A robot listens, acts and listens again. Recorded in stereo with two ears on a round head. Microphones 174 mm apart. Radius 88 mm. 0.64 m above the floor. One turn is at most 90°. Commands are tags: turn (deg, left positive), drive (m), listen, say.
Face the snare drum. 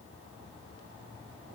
<listen/>
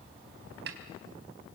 <turn deg="-55"/>
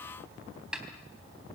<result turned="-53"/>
<say>Found it: a snare drum, straight ahead, 2 to 4 m away.</say>